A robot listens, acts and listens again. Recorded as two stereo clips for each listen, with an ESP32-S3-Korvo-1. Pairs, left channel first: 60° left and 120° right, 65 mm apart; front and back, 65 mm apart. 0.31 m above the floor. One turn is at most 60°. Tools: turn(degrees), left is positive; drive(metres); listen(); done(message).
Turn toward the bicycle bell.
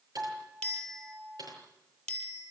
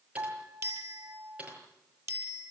turn(degrees=60)
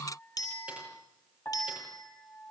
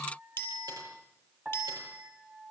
turn(degrees=60)
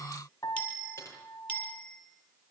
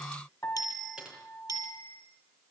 turn(degrees=-10)
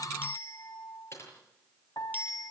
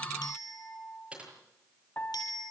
done("Facing the bicycle bell, over 4 m away.")